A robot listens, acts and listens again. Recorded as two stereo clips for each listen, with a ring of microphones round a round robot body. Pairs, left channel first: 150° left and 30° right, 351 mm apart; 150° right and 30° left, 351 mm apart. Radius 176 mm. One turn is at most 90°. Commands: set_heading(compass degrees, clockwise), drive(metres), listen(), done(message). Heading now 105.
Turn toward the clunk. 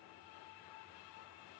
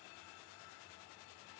listen()
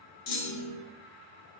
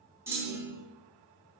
set_heading(15)
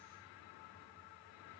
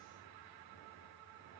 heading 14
set_heading(354)
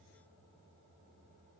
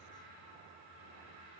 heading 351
done("Facing where the clunk came from. I can't hear it now.")